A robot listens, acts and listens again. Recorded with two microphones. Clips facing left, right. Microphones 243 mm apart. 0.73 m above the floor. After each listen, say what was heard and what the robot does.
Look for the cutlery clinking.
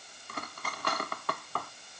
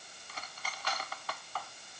The cutlery clinking: about 60° left or 120° left. Turn 60° left.
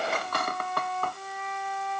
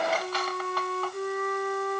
So it is at 60° left. Turn 60° left.
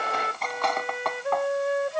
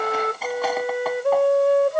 Found it: cutlery clinking, straight ahead.